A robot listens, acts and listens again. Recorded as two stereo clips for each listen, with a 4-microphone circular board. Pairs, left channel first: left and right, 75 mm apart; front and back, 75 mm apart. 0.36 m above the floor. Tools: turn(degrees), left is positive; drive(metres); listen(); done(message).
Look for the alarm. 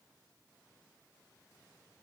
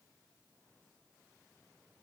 listen()
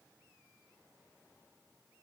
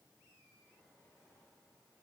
listen()
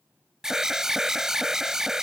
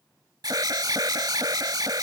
turn(degrees=-170)
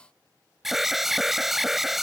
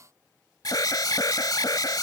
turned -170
done("Facing the alarm.")